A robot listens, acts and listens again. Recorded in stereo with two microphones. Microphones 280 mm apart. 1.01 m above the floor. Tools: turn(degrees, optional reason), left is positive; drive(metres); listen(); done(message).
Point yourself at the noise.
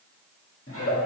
turn(degrees=50, reason="The giggle: about 50° left or 130° left.")
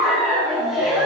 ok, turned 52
done("Facing the giggle.")